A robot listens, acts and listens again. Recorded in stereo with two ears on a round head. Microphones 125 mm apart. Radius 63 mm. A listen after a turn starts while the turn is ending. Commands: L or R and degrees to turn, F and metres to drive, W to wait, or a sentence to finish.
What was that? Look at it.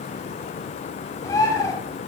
L25
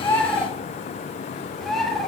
Facing the bird, 2 to 4 m away.